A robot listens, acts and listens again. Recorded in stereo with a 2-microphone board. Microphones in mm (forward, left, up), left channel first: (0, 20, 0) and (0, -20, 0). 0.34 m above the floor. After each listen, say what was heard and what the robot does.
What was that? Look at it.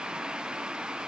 Keep listening.
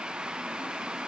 Keep listening.
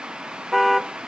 Turn 30° left.
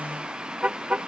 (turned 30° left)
So it is at 30° right. Turn 30° right.
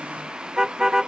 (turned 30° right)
The car horn is now 15° right. Turn 15° right.
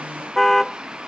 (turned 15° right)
Facing the car horn.